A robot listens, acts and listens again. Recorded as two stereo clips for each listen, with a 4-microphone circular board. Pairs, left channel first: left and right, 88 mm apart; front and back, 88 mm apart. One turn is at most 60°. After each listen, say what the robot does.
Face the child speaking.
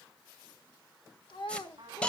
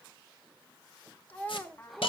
Turn 60° left.
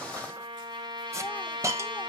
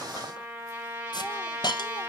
Turn 10° left.
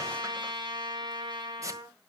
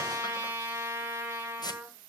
Keep listening.
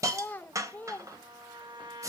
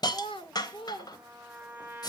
Turn 20° left.
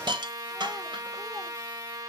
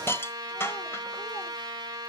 Keep listening.
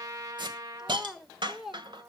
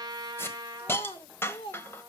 Found it: a child speaking, straight ahead.